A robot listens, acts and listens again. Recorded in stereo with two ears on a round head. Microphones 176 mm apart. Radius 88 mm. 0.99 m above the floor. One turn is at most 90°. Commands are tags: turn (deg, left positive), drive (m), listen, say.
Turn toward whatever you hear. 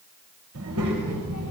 <turn deg="-90"/>
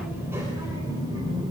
<turn deg="-25"/>
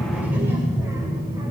<turn deg="-20"/>
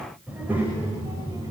<turn deg="-15"/>
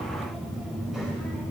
<say>Facing the child speaking, 2 to 4 m away.</say>